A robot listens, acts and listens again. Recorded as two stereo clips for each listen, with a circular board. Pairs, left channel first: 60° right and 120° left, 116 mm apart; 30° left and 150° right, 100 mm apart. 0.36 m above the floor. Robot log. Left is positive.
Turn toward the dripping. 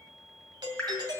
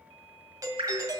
note: The dripping: 140° right.
cmd yaw -140
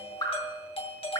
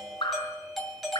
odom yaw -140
end: Facing the dripping.